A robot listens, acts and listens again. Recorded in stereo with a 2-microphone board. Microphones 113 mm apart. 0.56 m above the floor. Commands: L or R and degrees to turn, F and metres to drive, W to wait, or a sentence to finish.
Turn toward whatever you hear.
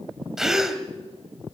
R30
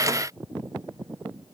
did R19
W
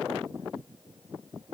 I heard a gasp, but can't make it out now. It was about 15° left or 155° right.